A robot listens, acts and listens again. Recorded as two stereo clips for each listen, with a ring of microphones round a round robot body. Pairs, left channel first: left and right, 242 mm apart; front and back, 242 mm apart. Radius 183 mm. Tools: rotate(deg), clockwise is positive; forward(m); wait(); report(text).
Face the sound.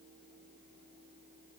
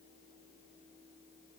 wait()
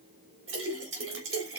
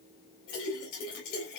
rotate(60)
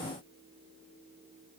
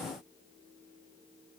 report("Facing where the splash came from. I can't hear it now.")